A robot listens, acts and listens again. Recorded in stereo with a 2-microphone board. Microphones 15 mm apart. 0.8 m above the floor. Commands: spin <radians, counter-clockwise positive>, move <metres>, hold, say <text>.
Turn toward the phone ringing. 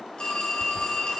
spin 1.13
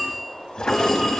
say Facing the phone ringing, over 4 m away.